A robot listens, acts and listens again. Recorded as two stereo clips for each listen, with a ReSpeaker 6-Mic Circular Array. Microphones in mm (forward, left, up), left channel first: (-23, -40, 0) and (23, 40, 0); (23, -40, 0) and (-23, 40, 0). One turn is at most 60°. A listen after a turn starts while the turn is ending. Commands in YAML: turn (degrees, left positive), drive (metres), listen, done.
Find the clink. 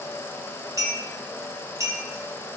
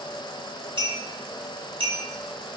turn: 60
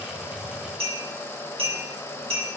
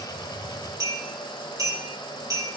turn: 60
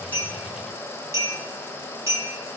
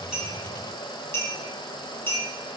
done: "Found it: a clink, straight ahead, 2 to 4 m away."